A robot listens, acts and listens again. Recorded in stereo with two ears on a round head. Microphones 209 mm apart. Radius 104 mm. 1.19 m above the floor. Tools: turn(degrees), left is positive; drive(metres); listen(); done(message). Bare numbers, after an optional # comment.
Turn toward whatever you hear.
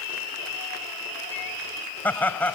turn(30)
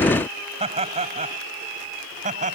# So it is at 35° right.
turn(-35)
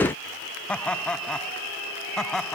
done("Facing the laughter.")